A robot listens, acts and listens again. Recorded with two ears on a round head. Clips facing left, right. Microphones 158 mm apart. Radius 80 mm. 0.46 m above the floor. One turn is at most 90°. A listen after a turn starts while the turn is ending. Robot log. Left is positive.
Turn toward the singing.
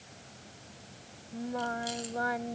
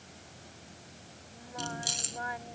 note: The singing: about 55° left or 125° left.
cmd yaw +55
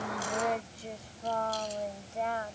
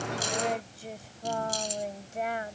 note: So it is at 20° right.
cmd yaw -20
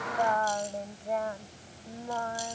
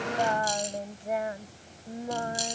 note: The singing is now 25° right.
cmd yaw -25
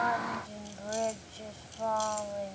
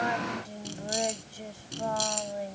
note: The singing is now 15° right.
cmd yaw -15
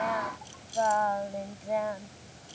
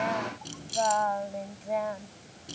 end: Facing the singing.